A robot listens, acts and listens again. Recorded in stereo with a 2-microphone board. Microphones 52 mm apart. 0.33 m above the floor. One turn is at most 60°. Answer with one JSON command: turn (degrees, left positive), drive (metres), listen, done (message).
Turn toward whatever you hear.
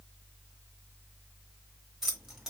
{"turn": -30}
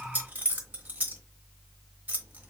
{"turn": -60}
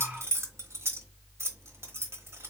{"turn": -60}
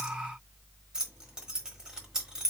{"turn": -15}
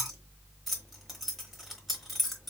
{"done": "Found it: keys jangling, straight ahead, 1 to 2 m away."}